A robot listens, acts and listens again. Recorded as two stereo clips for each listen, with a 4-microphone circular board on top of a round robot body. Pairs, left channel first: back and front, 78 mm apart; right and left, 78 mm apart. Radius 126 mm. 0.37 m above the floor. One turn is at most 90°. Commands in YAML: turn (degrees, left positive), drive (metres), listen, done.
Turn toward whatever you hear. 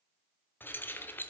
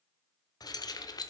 turn: -90
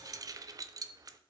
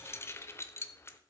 turn: -35
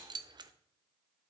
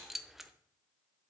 done: "Found it: keys jangling, straight ahead."